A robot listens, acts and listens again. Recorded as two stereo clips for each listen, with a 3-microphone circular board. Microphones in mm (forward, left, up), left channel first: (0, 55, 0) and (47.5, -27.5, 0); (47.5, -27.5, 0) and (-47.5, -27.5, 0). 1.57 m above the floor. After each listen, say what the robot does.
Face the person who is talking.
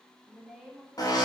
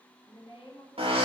Turn 25° left.
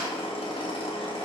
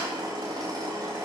Keep listening.
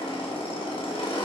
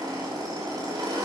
Keep listening.
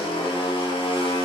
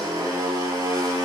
I heard a woman speaking from this way, but can't make it out now.